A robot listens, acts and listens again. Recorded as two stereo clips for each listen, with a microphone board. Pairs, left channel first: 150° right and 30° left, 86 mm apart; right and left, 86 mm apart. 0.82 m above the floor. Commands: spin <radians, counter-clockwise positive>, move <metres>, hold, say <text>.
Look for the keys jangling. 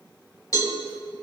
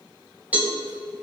hold
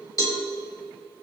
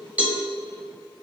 hold
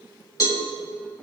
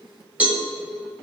say I can't make out keys jangling, only a cowbell.